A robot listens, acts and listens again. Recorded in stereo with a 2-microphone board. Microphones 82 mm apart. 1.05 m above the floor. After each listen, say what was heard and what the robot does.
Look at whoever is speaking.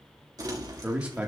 The man speaking: about 15° right or 165° right. Turn 15° right.
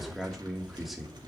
Found it: a man speaking, straight ahead, 1 to 2 m away.